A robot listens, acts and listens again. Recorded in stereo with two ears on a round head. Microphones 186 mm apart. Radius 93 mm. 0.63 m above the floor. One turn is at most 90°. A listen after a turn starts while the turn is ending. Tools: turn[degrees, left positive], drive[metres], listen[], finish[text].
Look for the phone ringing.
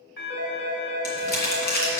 Thought: The phone ringing: about 55° left or 125° left.
Action: turn[55]
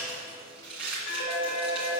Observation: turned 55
Thought: So it is at 70° left.
Action: turn[70]
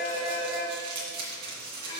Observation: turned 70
Thought: The phone ringing is now 25° left.
Action: turn[25]
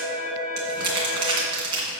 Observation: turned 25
Action: finish[Found it: a phone ringing, straight ahead, 2 to 4 m away.]